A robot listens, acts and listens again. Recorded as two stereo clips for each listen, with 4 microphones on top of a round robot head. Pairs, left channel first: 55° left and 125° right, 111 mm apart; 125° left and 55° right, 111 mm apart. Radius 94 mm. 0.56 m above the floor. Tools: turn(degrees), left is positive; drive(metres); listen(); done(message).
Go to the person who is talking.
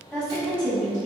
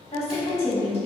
turn(degrees=140)
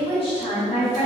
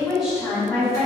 turn(degrees=35)
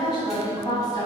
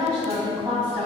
drive(metres=1.0)
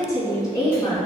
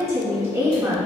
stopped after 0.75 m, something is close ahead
done("Arrived at the woman speaking, straight ahead.")